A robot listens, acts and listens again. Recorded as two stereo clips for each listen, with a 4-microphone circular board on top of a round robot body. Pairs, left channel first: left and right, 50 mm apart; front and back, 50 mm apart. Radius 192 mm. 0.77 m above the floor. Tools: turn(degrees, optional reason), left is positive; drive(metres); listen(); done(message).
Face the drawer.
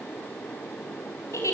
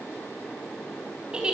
listen()
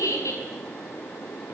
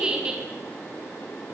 listen()
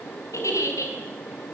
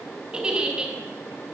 done("I can't make out a drawer, only a giggle.")